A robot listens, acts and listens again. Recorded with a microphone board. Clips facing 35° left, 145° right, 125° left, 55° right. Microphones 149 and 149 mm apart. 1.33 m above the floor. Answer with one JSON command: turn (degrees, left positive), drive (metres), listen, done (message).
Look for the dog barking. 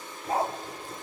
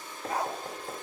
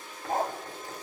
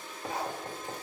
{"turn": 95}
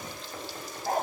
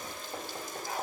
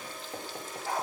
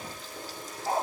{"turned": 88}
{"done": "Facing the dog barking."}